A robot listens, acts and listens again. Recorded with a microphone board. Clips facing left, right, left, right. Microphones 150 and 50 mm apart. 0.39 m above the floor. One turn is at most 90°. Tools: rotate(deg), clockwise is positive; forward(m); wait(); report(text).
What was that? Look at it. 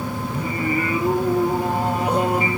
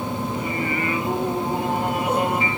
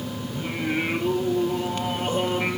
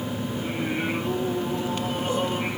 rotate(-35)
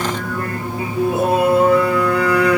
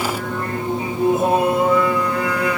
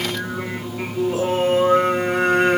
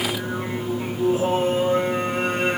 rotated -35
rotate(-90)
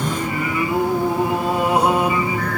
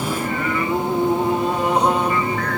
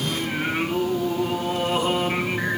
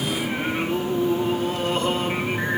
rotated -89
rotate(-10)
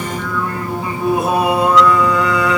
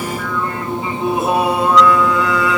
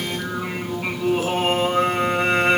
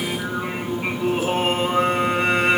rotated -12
report("Found it: singing, straight ahead.")